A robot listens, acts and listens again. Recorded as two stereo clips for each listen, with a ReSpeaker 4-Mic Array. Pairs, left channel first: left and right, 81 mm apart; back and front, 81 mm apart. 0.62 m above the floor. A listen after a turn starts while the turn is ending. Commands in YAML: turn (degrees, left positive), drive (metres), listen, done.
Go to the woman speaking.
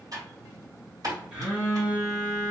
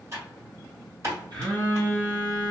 listen: true
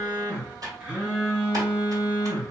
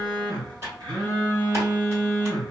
listen: true
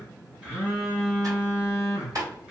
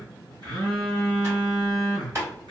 done: "I can't make out a woman speaking, only a phone buzzing and typing on a keyboard."